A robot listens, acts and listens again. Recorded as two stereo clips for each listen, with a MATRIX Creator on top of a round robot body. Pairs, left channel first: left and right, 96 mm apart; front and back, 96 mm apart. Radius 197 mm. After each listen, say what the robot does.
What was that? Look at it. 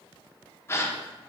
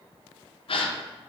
Turn 25° left.
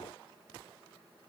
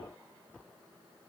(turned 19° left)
Facing where the gasp came from. I can't hear it now.